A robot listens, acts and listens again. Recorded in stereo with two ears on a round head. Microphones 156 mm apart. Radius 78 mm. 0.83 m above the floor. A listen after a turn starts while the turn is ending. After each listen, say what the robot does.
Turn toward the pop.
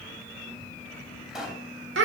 Turn 30° right.
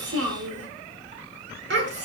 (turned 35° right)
Keep listening.
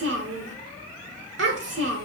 I heard a pop, but can't make it out now. It was about 30° left or 140° right.